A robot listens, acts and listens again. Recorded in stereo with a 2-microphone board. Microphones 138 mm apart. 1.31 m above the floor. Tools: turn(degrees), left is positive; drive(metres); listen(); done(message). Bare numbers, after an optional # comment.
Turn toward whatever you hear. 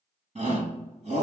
# The shout: about 60° right or 120° right.
turn(-60)
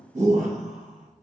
# So it is at 55° right.
turn(-55)
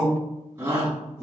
# The shout is now 15° right.
turn(-15)
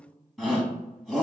done("Found it: a shout, straight ahead, 1 to 2 m away.")